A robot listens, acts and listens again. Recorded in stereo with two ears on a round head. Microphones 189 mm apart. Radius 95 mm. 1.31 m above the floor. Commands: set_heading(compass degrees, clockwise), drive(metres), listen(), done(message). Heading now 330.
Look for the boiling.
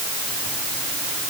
listen()
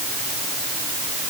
listen()
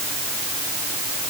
done("I can't make out boiling to turn to.")